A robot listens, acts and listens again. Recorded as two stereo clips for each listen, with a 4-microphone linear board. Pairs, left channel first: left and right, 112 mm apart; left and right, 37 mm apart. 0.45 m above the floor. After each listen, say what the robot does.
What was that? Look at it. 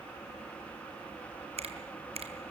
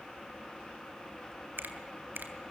Turn 70° right.
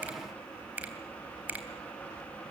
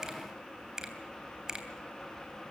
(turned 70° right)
Turn 15° right.
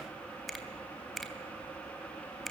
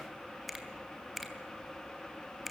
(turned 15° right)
Found it: a finger snap, straight ahead.